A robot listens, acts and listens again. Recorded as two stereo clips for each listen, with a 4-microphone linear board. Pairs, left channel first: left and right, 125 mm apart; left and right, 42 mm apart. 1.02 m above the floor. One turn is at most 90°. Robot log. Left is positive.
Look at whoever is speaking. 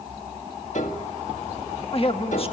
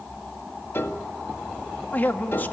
note: The man speaking: about 50° left or 130° left.
cmd yaw +50
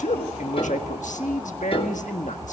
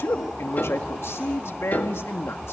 note: So it is at 85° left.
cmd yaw +85
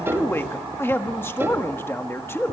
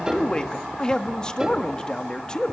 note: The man speaking is now 20° left.
cmd yaw +20
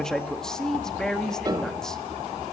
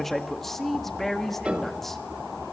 end: Found it: a man speaking, straight ahead.